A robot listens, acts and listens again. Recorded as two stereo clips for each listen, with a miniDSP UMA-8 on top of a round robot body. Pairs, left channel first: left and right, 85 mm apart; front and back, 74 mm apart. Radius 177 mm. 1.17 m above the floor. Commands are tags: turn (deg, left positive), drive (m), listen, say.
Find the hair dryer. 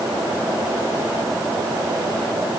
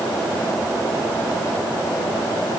<listen/>
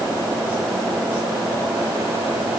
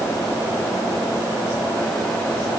<listen/>
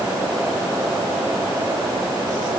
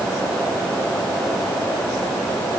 <say>I can't make out a hair dryer.</say>